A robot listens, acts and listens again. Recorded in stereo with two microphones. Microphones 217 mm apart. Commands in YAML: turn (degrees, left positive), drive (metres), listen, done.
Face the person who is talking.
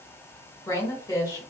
turn: 15
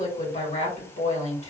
turn: 145
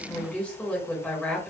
done: "Found it: a woman speaking, straight ahead."